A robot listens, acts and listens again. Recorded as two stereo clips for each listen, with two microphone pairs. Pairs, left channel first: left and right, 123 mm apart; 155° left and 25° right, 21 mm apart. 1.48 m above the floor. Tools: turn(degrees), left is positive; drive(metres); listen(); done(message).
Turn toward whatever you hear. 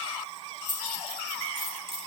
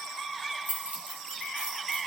turn(degrees=-45)
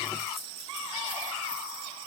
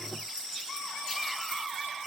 listen()
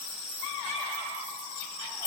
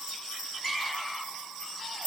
turn(degrees=-15)
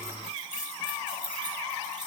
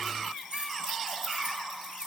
done("Facing the keys jangling, 2 to 4 m away.")